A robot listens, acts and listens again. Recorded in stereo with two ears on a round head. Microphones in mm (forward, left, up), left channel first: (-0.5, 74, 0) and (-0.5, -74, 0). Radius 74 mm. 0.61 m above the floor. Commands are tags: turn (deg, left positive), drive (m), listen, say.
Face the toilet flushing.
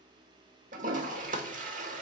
<turn deg="-50"/>
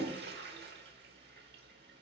<turn deg="-75"/>
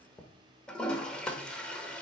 <say>Found it: a toilet flushing, straight ahead.</say>